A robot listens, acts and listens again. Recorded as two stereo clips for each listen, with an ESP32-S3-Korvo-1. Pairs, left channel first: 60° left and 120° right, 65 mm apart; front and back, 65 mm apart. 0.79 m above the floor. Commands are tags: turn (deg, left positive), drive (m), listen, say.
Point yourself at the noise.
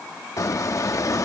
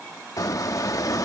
<turn deg="25"/>
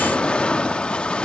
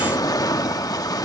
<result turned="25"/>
<turn deg="-15"/>
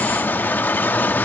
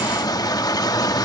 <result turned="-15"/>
<say>Found it: a squeak, straight ahead.</say>